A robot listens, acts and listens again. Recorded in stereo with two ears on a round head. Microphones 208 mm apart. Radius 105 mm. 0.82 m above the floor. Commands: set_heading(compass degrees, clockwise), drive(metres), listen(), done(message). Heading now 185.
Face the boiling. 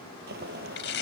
set_heading(230)
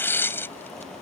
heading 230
done("Found it: boiling, straight ahead.")